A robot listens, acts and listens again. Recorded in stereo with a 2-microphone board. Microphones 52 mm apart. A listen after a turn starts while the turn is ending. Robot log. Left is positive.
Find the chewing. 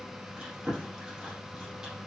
cmd yaw -30
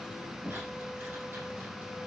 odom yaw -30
note: So it is at 140° right.
cmd yaw -140
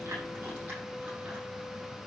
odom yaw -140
cmd idle
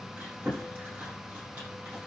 note: The chewing is now 40° right.
cmd yaw -40
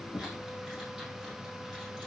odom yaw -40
cmd idle
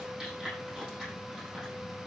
cmd idle
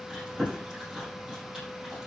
note: The chewing is now 15° right.
cmd yaw -15
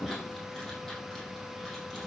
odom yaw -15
cmd idle
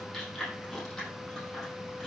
end: Facing the chewing.